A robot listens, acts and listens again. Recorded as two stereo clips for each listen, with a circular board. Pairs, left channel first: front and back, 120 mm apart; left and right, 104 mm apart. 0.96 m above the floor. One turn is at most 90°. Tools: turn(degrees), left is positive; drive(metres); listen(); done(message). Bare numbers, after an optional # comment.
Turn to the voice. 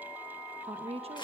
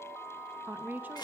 # The woman speaking: 160° right.
turn(-90)
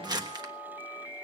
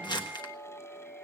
# Nothing new. It was at 70° right.
turn(-70)
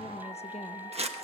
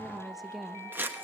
done("Facing the woman speaking.")